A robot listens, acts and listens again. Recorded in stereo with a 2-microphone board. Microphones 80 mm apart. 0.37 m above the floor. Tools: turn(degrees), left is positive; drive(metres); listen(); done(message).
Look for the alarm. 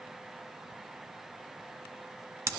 listen()
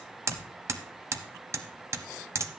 listen()
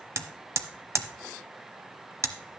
done("I can't make out an alarm to turn to.")